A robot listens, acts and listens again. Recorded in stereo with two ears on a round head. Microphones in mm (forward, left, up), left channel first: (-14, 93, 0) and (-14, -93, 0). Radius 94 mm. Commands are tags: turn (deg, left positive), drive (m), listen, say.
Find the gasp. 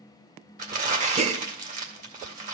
<turn deg="-35"/>
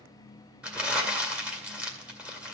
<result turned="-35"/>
<listen/>
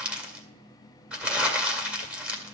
<say>I heard a gasp, but can't make it out now. It was about straight ahead or 110° right.</say>